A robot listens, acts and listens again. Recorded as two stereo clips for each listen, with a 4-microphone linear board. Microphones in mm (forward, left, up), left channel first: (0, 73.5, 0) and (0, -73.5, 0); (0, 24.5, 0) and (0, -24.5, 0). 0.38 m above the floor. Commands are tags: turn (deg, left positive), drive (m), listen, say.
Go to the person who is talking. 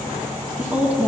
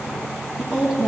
<turn deg="-30"/>
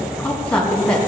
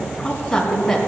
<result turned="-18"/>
<drive m="1.0"/>
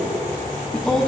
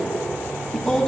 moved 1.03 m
<drive m="1.0"/>
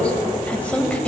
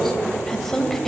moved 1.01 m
<turn deg="10"/>
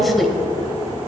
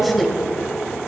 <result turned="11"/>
<drive m="1.0"/>
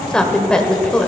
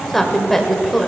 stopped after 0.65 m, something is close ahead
<turn deg="10"/>
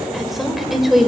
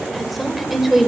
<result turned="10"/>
<say>Arrived at the woman speaking, straight ahead.</say>